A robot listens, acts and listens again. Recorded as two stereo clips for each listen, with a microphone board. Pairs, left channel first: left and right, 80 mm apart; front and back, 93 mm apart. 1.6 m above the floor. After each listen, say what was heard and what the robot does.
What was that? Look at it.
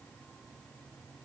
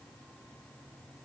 Keep listening.
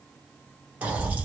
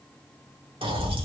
The pop: 165° right. Turn 165° right.
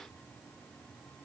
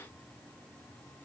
I heard a pop from this way, but can't make it out now.